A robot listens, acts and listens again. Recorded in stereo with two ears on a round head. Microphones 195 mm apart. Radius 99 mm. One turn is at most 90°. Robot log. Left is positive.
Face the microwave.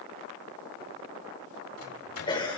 cmd yaw +90
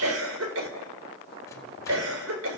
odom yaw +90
cmd idle
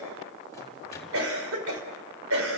cmd idle
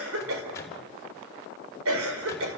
note: The microwave is now 15° left.
cmd yaw +15
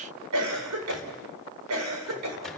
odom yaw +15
cmd idle
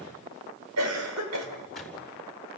end: Facing the microwave, over 4 m away.